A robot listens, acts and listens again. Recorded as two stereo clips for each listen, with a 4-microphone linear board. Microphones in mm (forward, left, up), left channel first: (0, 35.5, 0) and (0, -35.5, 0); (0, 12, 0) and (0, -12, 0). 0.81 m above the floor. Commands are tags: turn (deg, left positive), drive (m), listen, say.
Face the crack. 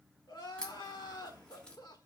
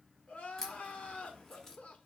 <turn deg="30"/>
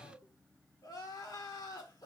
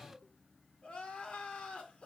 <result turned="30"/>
<listen/>
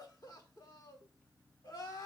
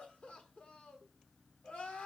<say>I heard a crack, but can't make it out now. It was about 15° right or 135° left.</say>